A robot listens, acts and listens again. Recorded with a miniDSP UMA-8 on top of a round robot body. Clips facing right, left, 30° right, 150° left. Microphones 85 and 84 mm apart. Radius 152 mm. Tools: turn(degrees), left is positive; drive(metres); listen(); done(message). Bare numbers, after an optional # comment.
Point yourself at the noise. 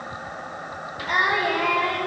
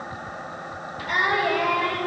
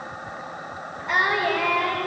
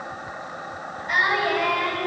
# The singing: 30° right.
turn(-30)
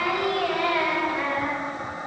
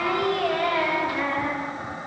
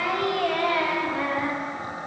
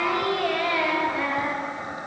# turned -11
# The singing is now 15° right.
turn(-15)
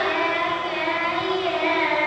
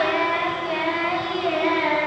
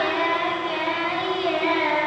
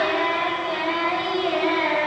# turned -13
done("Facing the singing.")